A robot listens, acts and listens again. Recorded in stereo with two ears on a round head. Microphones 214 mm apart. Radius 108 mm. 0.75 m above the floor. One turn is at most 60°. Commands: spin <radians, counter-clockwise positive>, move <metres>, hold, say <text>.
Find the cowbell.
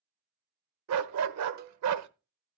spin -0.70
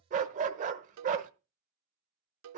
spin -1.05
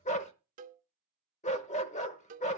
spin -0.61
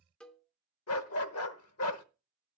say Facing the cowbell, under 1 m away.